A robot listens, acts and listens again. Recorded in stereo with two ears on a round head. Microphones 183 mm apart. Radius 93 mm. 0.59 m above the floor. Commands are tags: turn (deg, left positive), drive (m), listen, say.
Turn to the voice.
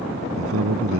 <turn deg="-90"/>
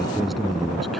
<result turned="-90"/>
<say>Found it: a man speaking, straight ahead.</say>